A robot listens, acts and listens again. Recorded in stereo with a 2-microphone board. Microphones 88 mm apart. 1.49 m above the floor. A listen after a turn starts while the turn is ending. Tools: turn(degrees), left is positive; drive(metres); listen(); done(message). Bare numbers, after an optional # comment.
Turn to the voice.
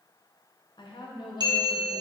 # The woman speaking: about 65° left or 115° left.
turn(65)
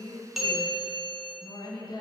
# So it is at 50° left.
turn(50)
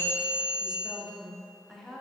done("Found it: a woman speaking, straight ahead.")